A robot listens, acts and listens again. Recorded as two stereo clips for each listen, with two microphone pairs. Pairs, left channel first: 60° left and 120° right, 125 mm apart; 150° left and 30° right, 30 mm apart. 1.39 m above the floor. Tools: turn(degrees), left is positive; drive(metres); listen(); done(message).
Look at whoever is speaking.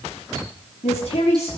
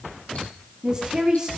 turn(degrees=30)
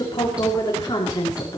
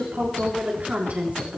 done("Facing the woman speaking.")